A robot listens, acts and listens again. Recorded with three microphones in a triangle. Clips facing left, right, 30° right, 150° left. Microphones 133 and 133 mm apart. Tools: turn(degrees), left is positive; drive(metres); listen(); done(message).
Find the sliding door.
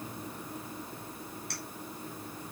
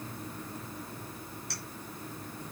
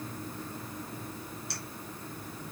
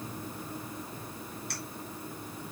listen()
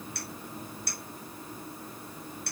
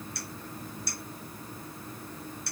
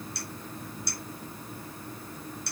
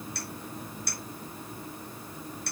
listen()
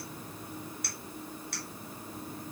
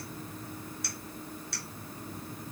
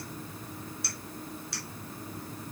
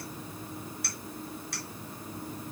done("I can't make out a sliding door to turn to.")